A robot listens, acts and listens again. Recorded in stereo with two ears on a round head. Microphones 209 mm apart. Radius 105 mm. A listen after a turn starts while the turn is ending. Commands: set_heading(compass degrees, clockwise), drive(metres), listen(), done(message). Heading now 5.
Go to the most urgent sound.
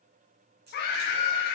set_heading(320)
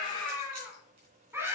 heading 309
set_heading(319)
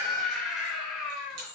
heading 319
drive(1.0)
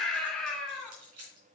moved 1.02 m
drive(1.0)
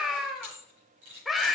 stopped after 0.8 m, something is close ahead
done("I am next to the scream.")